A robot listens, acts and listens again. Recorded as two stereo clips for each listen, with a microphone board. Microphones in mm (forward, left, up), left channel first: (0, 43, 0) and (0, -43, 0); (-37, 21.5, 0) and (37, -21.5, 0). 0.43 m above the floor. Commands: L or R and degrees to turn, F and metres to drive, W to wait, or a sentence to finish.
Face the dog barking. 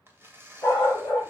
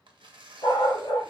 L150
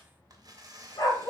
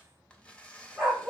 L60
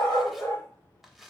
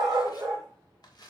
L20
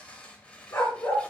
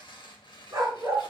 L20
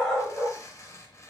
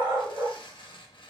Facing the dog barking, 2 to 4 m away.